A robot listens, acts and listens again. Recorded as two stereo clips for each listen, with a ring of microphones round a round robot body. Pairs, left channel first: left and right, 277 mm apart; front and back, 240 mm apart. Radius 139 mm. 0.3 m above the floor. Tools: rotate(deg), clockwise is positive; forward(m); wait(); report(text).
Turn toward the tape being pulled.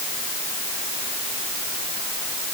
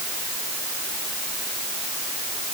wait()
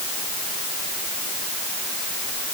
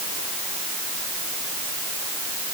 wait()
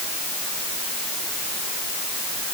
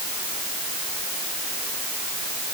report("I can't make out tape being pulled to turn to.")